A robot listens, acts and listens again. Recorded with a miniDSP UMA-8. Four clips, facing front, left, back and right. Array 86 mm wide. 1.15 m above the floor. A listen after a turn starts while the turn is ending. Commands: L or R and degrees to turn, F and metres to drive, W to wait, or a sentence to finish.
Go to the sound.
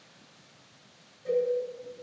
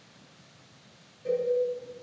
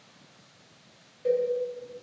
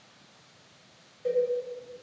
R145
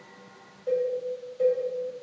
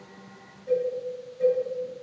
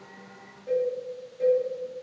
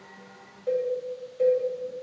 R60
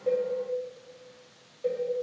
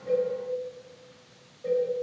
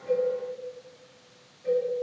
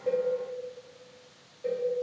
R10
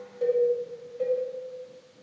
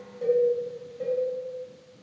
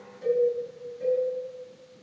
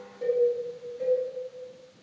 F1.0
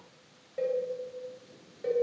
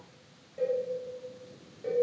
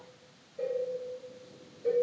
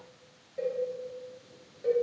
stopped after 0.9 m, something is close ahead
Arrived at the cowbell, straight ahead.